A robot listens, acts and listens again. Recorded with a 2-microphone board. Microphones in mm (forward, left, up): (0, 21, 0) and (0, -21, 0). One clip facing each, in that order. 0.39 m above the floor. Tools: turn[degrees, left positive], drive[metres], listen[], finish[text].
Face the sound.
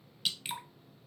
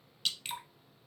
Action: turn[30]
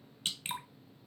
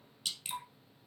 Thought: So it is at 145° left.
Action: turn[145]
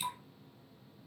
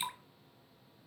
Thought: The dripping is now 25° right.
Action: turn[-25]
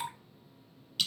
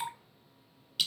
Action: finish[Facing the dripping, 1 to 2 m away.]